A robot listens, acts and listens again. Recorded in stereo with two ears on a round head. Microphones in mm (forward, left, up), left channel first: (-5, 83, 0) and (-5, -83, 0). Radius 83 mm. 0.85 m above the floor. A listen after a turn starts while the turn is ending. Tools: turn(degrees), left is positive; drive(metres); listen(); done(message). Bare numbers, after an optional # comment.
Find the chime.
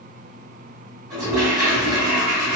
listen()
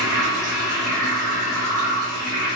listen()
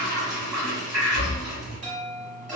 # The chime: about 40° right or 140° right.
turn(-40)
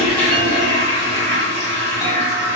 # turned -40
listen()
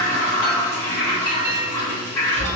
# So it is at 15° right.
turn(-15)
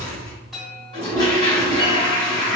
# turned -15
done("Facing the chime, 1 to 2 m away.")